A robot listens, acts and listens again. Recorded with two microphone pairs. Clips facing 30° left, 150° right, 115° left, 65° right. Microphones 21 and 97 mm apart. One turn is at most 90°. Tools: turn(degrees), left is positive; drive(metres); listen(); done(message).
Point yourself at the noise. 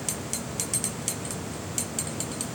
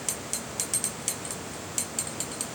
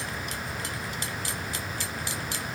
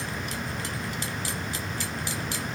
listen()
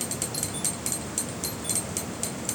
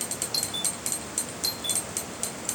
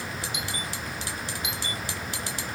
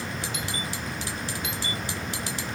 turn(degrees=-90)
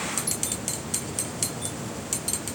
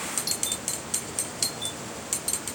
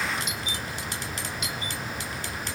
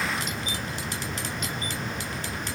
turn(degrees=-90)
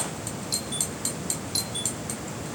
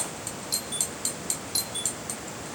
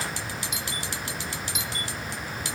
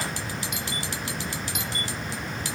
turn(degrees=-50)
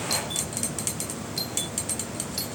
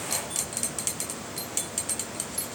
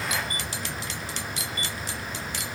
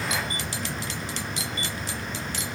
listen()
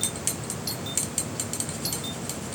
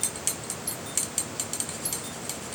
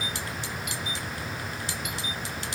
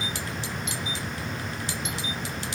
done("Facing the doorbell.")